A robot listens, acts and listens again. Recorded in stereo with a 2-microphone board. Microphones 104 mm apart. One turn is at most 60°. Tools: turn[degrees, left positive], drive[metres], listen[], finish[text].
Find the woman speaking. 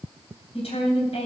Action: turn[60]
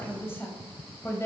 Thought: So it is at 30° left.
Action: turn[30]
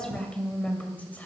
Thought: The woman speaking is now 15° left.
Action: turn[15]
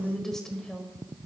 Thought: The woman speaking is now 10° left.
Action: turn[10]
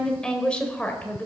Thought: The woman speaking is now 15° left.
Action: turn[15]
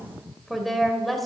Action: finish[Found it: a woman speaking, straight ahead, 2 to 4 m away.]